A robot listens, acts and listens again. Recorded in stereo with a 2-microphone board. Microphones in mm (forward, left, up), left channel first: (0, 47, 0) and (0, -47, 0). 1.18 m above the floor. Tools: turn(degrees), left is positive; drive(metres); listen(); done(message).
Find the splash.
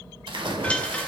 turn(degrees=-65)
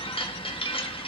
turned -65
listen()
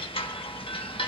done("I heard a splash, but can't make it out now. It was about straight ahead or 50° right.")